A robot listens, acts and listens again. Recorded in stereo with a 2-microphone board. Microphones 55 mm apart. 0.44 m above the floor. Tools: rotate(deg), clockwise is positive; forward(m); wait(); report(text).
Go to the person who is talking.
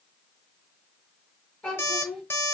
rotate(-30)
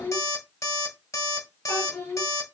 rotate(-135)
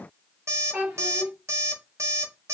rotate(25)
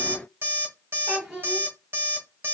forward(1.0)
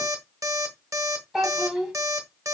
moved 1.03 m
rotate(10)
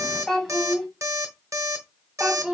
forward(1.0)
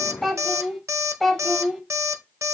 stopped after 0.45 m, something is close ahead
report("I am next to the child speaking.")